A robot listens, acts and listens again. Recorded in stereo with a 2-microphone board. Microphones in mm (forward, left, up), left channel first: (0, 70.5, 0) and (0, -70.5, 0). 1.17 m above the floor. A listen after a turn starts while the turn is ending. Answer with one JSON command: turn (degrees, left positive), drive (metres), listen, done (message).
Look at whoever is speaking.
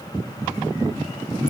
{"listen": true}
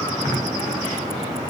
{"listen": true}
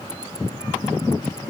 {"done": "I can't make out anyone speaking."}